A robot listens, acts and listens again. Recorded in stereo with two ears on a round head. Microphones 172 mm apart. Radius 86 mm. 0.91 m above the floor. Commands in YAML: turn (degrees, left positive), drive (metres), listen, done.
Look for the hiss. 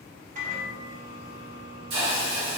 turn: -55
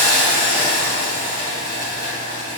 turn: -30
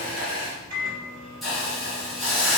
done: "Facing the hiss, 1 to 2 m away."